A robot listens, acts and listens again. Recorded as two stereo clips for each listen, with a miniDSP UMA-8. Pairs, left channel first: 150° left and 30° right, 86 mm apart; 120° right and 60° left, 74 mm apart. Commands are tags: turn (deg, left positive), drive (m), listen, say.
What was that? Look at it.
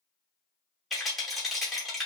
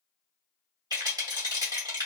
<turn deg="60"/>
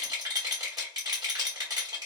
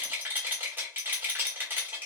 <say>Found it: a rattle, straight ahead.</say>